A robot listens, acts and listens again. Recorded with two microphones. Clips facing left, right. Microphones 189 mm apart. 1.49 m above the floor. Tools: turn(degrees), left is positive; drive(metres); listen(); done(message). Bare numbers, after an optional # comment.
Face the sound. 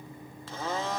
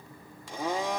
turn(-30)
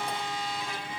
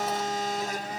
# So it is at 135° right.
turn(-135)
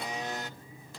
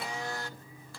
# The blender is now 20° left.
turn(20)
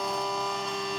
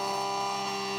done("Found it: a blender, straight ahead, under 1 m away.")